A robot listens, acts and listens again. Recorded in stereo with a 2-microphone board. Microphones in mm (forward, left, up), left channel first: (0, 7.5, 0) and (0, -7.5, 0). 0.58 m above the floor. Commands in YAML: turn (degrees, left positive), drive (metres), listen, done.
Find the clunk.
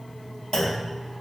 turn: 55
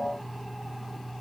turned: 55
listen: true
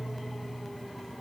done: "I heard a clunk, but can't make it out now. It was about straight ahead or 70° left."